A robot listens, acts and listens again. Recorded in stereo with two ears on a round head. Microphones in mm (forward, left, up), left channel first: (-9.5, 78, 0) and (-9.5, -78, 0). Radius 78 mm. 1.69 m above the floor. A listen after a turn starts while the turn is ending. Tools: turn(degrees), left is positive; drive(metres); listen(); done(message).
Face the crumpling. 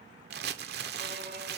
turn(degrees=-65)
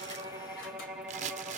turn(degrees=-45)
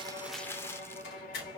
turn(degrees=15)
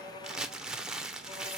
done("Facing the crumpling.")